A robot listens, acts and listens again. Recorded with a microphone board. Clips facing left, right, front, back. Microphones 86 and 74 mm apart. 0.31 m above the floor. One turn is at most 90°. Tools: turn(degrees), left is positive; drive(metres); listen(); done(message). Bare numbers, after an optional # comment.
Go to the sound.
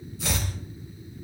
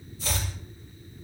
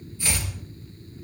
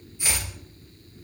# The chopping: 110° left.
turn(90)
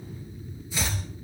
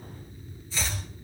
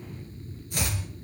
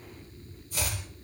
# The chopping is now 15° left.
turn(15)
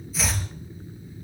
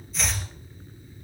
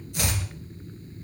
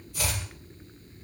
drive(1.0)
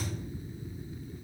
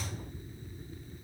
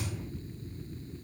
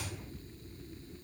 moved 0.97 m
listen()
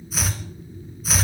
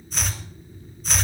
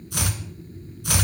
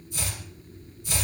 drive(1.0)
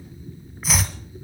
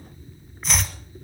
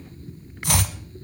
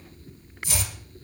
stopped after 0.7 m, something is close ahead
done("Arrived at the chopping, straight ahead.")